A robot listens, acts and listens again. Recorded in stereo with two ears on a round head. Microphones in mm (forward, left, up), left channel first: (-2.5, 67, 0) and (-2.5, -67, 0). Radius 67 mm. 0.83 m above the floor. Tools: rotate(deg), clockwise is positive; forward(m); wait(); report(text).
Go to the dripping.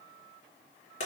wait()
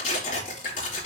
rotate(-90)
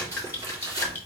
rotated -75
rotate(-15)
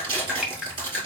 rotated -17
forward(1.0)
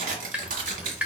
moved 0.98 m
forward(1.0)
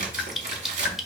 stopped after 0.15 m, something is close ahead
report("Arrived at the dripping, straight ahead.")